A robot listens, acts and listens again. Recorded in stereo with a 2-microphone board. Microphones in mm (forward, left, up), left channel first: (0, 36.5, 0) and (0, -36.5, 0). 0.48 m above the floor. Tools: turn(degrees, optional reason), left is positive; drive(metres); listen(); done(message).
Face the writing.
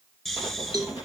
turn(degrees=-25, reason="The writing: about 25° right or 155° right.")
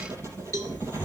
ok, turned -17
turn(degrees=-140, reason="So it is at 140° right.")
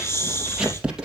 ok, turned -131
turn(degrees=-10, reason="The writing is now 10° right.")
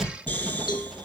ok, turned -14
done("Facing the writing, 2 to 4 m away.")